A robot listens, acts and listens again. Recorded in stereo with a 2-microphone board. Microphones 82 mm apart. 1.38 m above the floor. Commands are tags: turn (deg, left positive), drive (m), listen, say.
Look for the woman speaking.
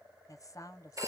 <turn deg="45"/>
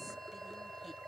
<listen/>
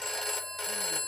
<listen/>
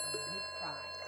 <say>I heard a woman speaking, but can't make it out now. It was about straight ahead or 90° left.</say>